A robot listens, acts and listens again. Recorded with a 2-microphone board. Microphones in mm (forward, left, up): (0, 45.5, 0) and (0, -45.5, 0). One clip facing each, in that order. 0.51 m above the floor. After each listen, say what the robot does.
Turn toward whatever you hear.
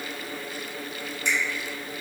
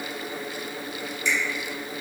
Turn 55° left.
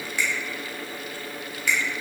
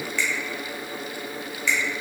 Turn 15° left.
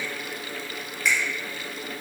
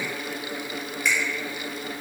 Found it: a finger snap, straight ahead.